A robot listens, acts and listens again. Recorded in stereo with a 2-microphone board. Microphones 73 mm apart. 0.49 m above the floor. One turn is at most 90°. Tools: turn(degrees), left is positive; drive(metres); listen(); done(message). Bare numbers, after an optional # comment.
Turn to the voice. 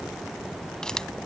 listen()
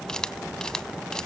listen()
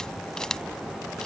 done("I can't make out anyone speaking to turn to.")